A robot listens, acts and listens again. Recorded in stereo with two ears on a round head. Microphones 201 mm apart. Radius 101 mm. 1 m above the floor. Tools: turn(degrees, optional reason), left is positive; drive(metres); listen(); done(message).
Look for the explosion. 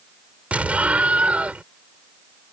turn(degrees=-30)
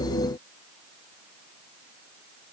listen()
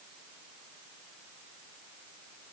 done("I heard an explosion, but can't make it out now. It was about 25° left or 145° right.")